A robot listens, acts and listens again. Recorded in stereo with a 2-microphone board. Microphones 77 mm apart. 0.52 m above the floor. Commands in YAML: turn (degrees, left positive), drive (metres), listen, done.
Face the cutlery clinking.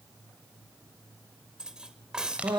turn: -30
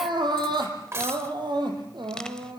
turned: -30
turn: -140
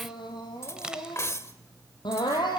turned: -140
turn: 40
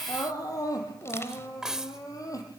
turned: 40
turn: -10
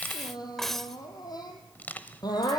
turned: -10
done: "Facing the cutlery clinking, 1 to 2 m away."